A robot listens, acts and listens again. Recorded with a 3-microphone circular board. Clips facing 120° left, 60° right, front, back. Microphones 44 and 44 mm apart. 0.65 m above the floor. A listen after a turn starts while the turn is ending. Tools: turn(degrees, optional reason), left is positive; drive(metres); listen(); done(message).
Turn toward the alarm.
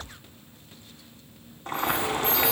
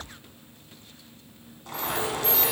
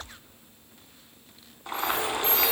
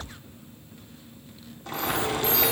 turn(degrees=-45, reason="The alarm: 45° right.")
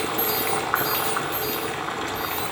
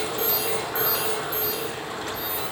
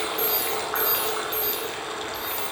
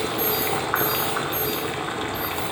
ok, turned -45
done("Facing the alarm, 2 to 4 m away.")